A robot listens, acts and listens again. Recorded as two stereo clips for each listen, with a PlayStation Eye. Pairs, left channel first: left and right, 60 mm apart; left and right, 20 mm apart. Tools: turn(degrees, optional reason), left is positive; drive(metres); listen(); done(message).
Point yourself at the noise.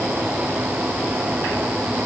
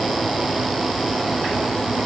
listen()
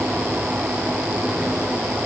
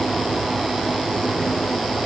listen()
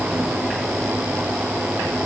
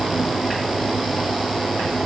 done("I can't make out anything.")